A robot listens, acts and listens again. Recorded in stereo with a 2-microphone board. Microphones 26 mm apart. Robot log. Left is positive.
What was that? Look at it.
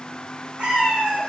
note: The cat meowing: about 70° right or 110° right.
cmd yaw -70
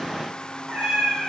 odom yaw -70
note: So it is at 25° right.
cmd yaw -25
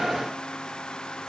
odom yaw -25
cmd idle
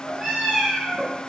note: The cat meowing is now 20° right.
cmd yaw -20
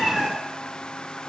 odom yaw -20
end: Facing the cat meowing.